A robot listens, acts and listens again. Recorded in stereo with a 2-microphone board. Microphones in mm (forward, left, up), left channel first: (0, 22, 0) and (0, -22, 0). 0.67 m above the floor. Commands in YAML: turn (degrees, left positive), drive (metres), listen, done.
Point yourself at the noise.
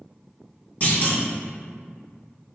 turn: 40
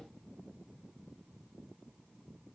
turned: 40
listen: true
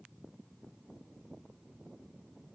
done: "I heard a clunk, but can't make it out now. It was about straight ahead or 100° left."